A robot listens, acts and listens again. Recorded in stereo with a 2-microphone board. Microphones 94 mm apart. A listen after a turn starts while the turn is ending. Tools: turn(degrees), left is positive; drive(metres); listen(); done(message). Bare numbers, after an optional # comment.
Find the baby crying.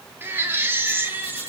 # The baby crying: about 25° right or 155° right.
turn(-25)
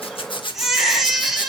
done("Facing the baby crying.")